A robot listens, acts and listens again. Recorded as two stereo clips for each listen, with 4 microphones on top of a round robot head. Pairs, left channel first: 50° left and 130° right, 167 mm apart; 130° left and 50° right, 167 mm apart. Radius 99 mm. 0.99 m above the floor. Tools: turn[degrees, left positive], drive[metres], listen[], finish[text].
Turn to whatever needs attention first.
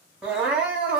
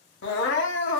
Thought: The crying: 145° left.
Action: turn[145]
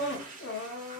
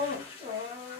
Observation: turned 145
Thought: The crying is now 25° left.
Action: turn[25]
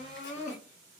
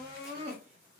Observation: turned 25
Action: finish[Found it: crying, straight ahead, under 1 m away.]